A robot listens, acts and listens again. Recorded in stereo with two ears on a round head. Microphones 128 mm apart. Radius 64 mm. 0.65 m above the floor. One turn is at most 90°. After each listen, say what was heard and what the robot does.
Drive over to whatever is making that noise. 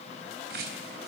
Turn 90° right.
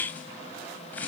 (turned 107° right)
So it is at 10° left. Turn 10° left.
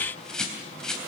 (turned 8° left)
Drive 1.0 m forward.
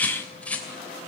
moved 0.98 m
The bird is now 10° left. Turn 10° left.
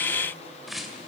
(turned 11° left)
Drive 1.0 m forward.
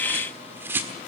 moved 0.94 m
The bird is now 15° right. Turn 15° right.
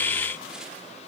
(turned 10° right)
Keep listening.
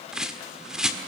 Drive 1.0 m forward.
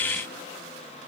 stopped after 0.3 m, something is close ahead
Keep listening.
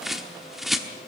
I am next to the bird.